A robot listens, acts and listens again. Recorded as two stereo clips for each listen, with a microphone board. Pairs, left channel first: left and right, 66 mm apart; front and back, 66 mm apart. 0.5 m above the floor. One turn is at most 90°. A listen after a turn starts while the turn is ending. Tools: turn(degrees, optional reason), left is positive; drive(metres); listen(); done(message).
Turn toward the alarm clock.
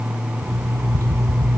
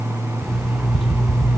turn(degrees=-90, reason="The alarm clock: 90° right.")
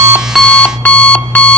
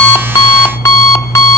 turn(degrees=30, reason="The alarm clock is now 30° left.")
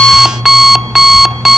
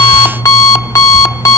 done("Facing the alarm clock.")